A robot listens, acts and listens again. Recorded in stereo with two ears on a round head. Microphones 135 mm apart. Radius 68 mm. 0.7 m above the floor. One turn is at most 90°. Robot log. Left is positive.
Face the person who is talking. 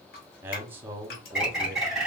cmd yaw -30
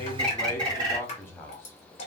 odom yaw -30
note: So it is at 15° left.
cmd yaw +15
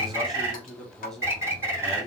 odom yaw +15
end: Found it: a man speaking, straight ahead, under 1 m away.